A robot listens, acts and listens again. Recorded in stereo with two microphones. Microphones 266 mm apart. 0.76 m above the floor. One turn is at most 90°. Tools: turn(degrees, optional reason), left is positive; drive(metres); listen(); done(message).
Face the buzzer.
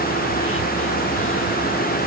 listen()
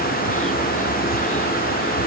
listen()
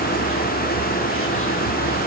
done("I can't make out a buzzer.")